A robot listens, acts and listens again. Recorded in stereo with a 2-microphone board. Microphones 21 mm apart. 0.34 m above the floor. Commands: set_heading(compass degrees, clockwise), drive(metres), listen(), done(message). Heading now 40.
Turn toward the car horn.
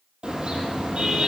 set_heading(90)
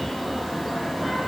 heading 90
done("Facing the car horn, over 4 m away.")